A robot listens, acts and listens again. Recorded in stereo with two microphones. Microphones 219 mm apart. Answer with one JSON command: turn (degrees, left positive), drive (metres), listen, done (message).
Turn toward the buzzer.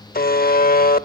{"turn": 45}
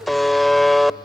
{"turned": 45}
{"done": "Found it: a buzzer, straight ahead."}